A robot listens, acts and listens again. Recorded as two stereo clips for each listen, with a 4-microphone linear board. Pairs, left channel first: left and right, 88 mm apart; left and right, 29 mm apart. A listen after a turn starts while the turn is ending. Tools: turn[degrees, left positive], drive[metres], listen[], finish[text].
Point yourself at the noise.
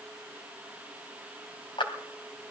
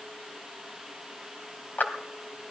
Thought: The clap: about 70° left or 110° left.
Action: turn[70]
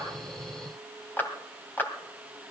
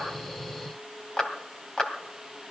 Thought: So it is at 25° left.
Action: turn[25]
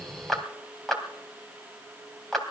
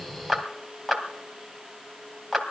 Action: finish[Found it: a clap, straight ahead, 2 to 4 m away.]